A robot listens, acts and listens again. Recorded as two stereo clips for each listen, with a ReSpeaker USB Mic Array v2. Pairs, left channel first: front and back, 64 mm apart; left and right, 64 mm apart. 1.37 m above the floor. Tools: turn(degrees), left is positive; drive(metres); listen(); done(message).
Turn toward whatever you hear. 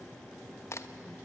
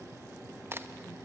turn(degrees=-40)
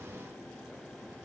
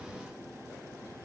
done("I heard a crack from this way, but can't make it out now.")